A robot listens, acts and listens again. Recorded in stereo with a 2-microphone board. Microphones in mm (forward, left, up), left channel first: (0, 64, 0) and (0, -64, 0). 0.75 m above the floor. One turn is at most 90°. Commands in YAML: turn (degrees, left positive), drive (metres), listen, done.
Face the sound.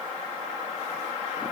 listen: true
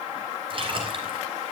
turn: -40
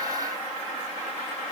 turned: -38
listen: true
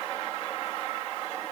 done: "I heard a splash, but can't make it out now. It was about 5° right or 100° right."